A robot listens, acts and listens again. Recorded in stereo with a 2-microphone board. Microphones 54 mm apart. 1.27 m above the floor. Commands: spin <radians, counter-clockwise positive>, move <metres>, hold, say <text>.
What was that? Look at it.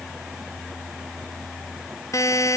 spin 1.22
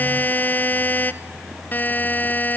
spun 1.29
spin 0.61
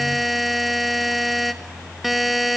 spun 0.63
say Facing the buzzer.